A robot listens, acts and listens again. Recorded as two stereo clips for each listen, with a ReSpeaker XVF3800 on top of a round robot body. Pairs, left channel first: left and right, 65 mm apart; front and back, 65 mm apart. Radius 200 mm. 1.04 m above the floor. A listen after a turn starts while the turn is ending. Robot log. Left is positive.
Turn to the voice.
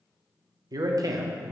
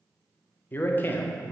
note: The man speaking: 60° right.
cmd yaw -60
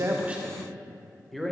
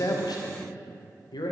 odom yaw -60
end: Found it: a man speaking, straight ahead.